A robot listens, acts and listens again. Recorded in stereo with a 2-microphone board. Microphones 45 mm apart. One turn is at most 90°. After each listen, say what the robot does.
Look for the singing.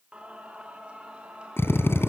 Turn 20° right.
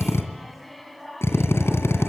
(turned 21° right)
Found it: singing, straight ahead, 2 to 4 m away.